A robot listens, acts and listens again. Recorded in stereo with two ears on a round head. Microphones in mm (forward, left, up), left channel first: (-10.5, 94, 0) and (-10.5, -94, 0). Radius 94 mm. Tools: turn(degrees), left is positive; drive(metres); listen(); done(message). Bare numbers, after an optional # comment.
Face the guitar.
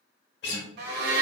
# The guitar: about 55° left or 125° left.
turn(55)
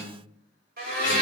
listen()
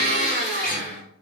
listen()
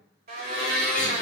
done("I heard a guitar, but can't make it out now. It was about straight ahead or 70° left.")